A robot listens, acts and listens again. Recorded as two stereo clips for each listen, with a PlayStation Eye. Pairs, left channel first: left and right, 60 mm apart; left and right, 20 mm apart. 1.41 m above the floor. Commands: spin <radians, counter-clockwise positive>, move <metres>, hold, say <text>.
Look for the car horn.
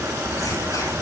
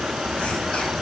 hold
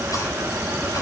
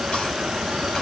hold
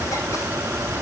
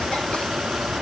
say I can't make out a car horn to turn to.